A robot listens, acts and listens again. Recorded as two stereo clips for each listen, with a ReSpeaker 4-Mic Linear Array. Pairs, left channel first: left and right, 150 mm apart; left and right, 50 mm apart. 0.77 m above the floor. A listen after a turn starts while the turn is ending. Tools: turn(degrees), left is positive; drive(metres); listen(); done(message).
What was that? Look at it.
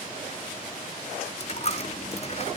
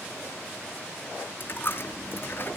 turn(degrees=50)
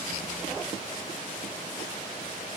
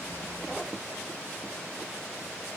listen()
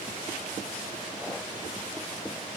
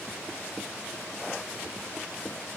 done("I heard a dropped coin, but can't make it out now. It was about straight ahead or 80° left.")